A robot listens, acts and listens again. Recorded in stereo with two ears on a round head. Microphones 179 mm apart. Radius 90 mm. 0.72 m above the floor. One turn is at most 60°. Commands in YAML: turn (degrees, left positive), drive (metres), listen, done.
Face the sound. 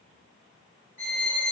turn: 40
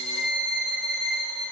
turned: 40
done: "Found it: a violin, straight ahead."